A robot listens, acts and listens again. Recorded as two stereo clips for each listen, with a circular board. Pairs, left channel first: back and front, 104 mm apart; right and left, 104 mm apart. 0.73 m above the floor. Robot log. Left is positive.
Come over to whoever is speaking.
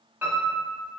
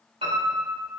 cmd idle
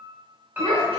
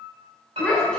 note: The child speaking: 10° right.
cmd yaw -10
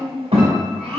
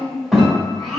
cmd fwd 1.0
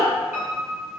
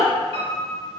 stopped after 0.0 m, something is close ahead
end: Blocked. The child speaking is further on, straight ahead.